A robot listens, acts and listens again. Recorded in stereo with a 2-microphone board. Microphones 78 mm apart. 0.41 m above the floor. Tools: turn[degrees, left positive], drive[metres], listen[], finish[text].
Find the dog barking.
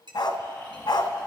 Action: turn[90]
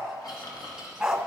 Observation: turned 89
Action: finish[Found it: a dog barking, straight ahead.]